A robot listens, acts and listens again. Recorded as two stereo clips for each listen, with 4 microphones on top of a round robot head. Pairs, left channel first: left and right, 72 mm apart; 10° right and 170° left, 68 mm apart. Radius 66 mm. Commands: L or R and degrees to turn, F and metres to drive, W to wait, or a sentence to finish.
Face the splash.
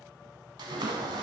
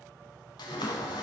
R45
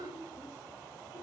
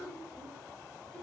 Facing where the splash came from. I can't hear it now.